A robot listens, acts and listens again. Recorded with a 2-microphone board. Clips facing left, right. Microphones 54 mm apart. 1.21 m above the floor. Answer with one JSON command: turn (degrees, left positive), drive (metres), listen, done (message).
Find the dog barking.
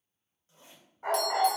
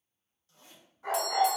{"turn": 65}
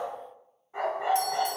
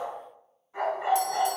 {"turn": 35}
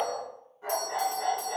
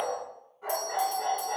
{"turn": -10}
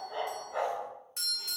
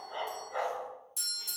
{"done": "Facing the dog barking, 2 to 4 m away."}